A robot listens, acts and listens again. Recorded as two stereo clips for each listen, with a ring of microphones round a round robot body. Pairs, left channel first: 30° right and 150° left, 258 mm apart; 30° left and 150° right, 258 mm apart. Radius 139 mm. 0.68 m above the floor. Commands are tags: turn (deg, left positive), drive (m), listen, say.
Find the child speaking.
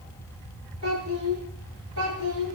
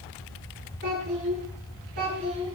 <turn deg="160"/>
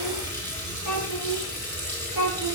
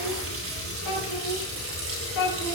<turn deg="-10"/>
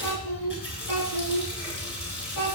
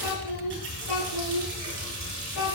<say>Facing the child speaking, over 4 m away.</say>